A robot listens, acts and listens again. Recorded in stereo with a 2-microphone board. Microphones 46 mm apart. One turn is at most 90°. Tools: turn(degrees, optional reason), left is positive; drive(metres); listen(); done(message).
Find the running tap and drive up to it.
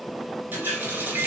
turn(degrees=-45, reason="The running tap: about 45° right or 135° right.")
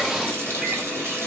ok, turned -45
turn(degrees=-80, reason="So it is at 80° right.")
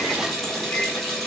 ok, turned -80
drive(metres=1.0)
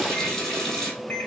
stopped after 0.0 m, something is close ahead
turn(degrees=10, reason="The running tap is now 10° left.")
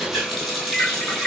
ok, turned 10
done("Something is in my way. I am facing the running tap but have not reached it.")